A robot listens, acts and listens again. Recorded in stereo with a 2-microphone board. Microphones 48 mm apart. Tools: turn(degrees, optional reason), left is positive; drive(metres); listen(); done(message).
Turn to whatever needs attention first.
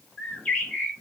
listen()
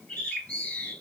listen()
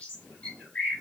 done("I can't make out anything urgent, only a bird.")